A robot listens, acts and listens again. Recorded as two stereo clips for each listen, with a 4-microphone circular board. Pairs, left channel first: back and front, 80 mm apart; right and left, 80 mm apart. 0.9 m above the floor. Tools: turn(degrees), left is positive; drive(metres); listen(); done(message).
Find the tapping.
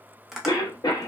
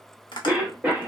turn(degrees=-85)
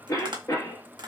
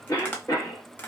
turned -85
turn(degrees=-20)
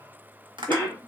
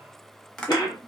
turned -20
done("Found it: tapping, straight ahead.")